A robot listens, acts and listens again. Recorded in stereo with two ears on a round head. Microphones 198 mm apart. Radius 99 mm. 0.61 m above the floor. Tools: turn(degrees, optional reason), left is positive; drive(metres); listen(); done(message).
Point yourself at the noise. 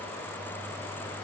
listen()
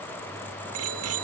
turn(degrees=-90)
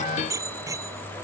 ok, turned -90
turn(degrees=-15, reason="So it is at 15° right.")
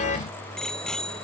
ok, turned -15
done("Facing the bicycle bell.")